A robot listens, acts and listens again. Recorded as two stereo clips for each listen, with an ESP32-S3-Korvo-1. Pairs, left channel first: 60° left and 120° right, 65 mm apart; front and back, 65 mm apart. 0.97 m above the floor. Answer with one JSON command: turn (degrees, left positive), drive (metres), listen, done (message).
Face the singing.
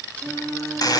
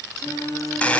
{"done": "Facing the singing, over 4 m away."}